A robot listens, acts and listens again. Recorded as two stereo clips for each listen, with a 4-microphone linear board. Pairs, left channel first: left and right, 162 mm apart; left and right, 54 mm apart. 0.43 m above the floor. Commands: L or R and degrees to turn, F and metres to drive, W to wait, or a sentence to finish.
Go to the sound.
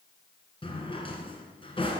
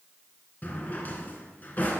L35
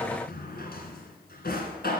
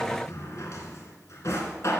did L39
L105
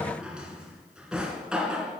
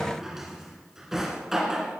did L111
F1.0
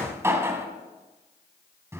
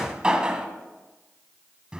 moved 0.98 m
R15
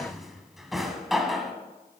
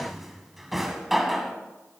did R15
F1.0
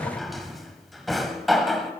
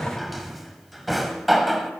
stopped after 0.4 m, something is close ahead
I am next to the drawer.